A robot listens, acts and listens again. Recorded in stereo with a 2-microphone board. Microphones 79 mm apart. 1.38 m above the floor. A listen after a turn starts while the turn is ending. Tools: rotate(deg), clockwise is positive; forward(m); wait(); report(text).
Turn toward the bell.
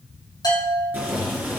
rotate(-55)
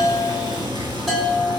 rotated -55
report("Found it: a bell, straight ahead, 2 to 4 m away.")